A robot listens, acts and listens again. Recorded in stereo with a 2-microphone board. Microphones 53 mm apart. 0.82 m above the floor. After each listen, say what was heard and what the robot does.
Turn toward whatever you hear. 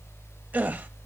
The gasp: about 30° right or 150° right. Turn 30° right.
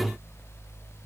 Keep listening.
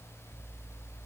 I heard a gasp, but can't make it out now. It was about straight ahead or 120° right.